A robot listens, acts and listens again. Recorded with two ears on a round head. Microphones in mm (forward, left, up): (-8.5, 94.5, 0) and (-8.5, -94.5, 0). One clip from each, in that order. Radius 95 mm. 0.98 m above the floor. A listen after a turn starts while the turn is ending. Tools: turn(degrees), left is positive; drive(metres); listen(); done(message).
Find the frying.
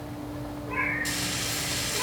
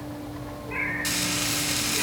turn(degrees=-50)
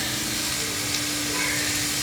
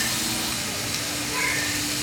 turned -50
done("Facing the frying.")